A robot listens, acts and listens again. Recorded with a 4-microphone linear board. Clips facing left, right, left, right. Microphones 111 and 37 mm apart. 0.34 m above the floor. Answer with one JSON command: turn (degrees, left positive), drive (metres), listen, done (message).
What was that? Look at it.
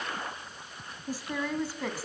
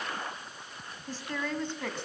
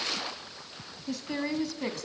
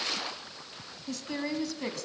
{"turn": 30}
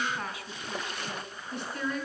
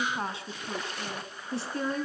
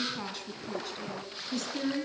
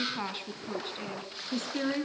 {"turn": -35}
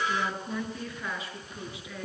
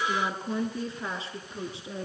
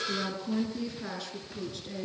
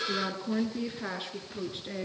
{"turn": -30}
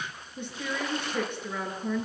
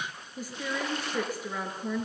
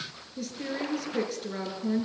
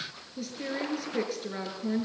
{"done": "Found it: a woman speaking, straight ahead, over 4 m away."}